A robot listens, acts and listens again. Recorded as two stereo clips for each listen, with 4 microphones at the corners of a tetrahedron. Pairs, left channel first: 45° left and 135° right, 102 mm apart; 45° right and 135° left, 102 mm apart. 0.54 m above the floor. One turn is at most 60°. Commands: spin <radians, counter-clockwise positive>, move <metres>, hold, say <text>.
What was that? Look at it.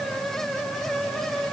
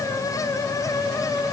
hold
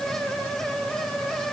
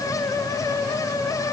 hold
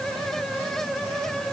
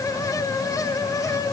say I can't make out anything to turn to.